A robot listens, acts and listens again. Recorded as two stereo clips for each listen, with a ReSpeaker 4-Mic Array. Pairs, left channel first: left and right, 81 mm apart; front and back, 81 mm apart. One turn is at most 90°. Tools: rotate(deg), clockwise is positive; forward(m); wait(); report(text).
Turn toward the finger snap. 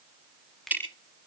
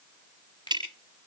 report("Found it: a finger snap, straight ahead.")